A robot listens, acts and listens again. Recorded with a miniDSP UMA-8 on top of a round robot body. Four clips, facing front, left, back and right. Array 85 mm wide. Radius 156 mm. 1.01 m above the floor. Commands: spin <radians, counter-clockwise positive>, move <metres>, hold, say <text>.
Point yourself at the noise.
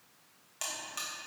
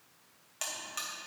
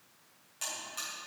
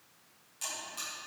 spin 1.05
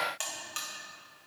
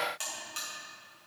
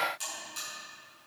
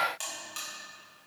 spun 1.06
say Found it: a buzzer, straight ahead, 2 to 4 m away.